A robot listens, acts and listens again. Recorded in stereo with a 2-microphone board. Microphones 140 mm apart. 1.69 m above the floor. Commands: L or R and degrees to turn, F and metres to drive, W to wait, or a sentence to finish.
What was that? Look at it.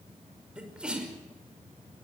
R30
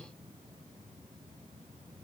W
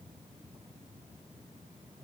I heard a sneeze, but can't make it out now. It was about 25° left or 145° right.